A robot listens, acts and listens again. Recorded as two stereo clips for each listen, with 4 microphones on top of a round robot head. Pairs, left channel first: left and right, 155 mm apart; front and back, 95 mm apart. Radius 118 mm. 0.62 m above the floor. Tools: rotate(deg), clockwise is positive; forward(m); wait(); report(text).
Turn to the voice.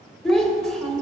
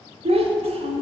rotate(-175)
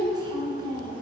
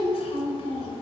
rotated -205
rotate(25)
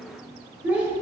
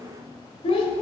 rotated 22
rotate(10)
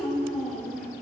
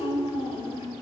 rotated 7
report("Facing the child speaking, 1 to 2 m away.")